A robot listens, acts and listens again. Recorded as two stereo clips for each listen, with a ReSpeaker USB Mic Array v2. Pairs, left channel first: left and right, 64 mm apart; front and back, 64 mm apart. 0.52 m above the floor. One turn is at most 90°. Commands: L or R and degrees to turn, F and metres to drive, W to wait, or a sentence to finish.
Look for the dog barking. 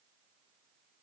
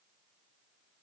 W
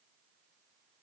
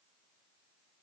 W
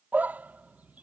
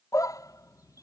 R25
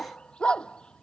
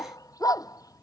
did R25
L15
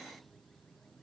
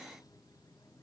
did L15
W
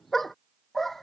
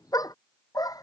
Found it: a dog barking, straight ahead.